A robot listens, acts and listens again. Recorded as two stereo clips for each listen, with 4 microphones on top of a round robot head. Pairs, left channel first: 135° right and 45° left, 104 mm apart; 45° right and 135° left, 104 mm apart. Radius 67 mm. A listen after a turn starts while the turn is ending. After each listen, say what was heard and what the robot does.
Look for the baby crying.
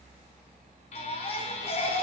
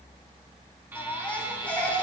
The baby crying: 120° right. Turn 120° right.
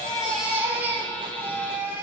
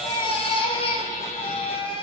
The baby crying is now 25° right. Turn 25° right.
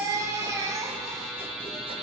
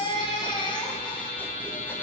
The baby crying is now 10° right. Turn 10° right.
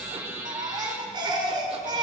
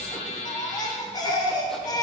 Facing the baby crying, 1 to 2 m away.